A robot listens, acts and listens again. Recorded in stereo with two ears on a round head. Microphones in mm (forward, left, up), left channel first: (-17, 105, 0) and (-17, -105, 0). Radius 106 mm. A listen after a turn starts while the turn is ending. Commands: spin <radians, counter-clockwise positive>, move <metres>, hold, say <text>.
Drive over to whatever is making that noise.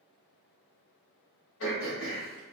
spin 0.96
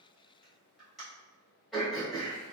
move 1.0
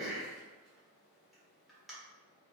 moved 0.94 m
move 1.0
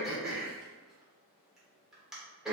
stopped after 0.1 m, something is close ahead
say Arrived at the throat clearing, straight ahead.